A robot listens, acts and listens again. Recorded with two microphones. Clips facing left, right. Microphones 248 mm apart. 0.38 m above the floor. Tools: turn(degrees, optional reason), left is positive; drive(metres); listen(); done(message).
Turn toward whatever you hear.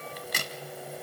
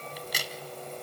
turn(degrees=55, reason="The crack: about 55° left or 125° left.")
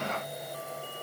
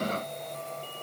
listen()
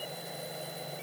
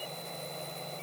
done("I heard a crack, but can't make it out now. It was about straight ahead or 70° left.")